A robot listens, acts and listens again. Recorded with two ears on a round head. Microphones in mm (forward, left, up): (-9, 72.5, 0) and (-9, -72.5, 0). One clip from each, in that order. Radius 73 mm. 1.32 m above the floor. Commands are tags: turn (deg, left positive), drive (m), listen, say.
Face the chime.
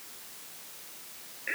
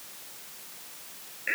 <listen/>
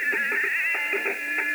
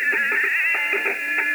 <listen/>
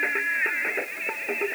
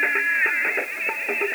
<say>I can't make out a chime to turn to.</say>